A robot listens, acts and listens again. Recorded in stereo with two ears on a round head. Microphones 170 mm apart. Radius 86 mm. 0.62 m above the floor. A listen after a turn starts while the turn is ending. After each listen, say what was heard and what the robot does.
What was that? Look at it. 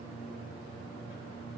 Keep listening.
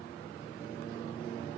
Keep listening.
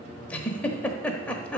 Turn 30° left.
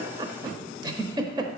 So it is at 20° right. Turn 20° right.
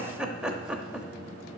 Found it: a giggle, straight ahead, 1 to 2 m away.